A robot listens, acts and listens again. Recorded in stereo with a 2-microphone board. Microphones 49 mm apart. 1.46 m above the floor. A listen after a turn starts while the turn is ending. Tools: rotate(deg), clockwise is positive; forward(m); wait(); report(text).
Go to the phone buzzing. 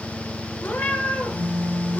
rotate(-50)
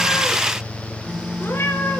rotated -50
forward(1.0)
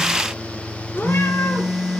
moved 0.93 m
forward(1.0)
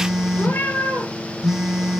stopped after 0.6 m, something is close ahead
rotate(10)
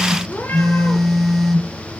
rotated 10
report("Arrived at the phone buzzing, straight ahead.")